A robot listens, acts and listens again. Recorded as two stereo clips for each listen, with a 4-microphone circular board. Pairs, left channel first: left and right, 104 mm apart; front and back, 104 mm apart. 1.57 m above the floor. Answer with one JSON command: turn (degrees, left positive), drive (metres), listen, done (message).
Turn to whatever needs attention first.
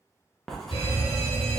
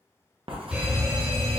{"turn": 100}
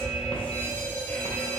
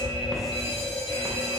{"turn": 15}
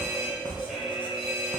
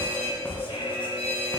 {"done": "Facing the fire alarm."}